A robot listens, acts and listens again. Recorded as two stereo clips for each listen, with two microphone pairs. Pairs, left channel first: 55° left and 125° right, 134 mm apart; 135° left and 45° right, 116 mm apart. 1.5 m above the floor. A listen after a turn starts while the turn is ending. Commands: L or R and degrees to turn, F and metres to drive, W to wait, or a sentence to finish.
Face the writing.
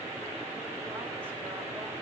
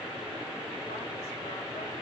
W
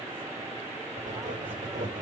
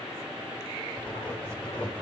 R150
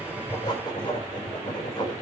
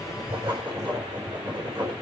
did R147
Facing the writing, over 4 m away.